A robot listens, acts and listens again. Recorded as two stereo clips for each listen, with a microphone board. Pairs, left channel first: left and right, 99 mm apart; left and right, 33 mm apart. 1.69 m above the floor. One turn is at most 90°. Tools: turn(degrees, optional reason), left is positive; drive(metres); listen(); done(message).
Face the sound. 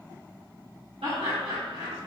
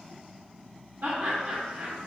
turn(degrees=-90)
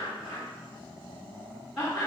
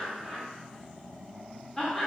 done("Found it: laughter, straight ahead, 1 to 2 m away.")